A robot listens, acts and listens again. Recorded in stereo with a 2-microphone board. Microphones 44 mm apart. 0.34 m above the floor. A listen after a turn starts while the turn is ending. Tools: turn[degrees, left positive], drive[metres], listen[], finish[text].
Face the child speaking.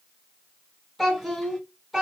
Action: turn[-30]
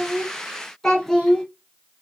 Thought: So it is at 10° left.
Action: turn[10]
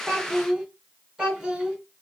Thought: The child speaking is now 15° right.
Action: turn[-15]
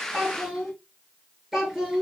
Action: finish[Facing the child speaking.]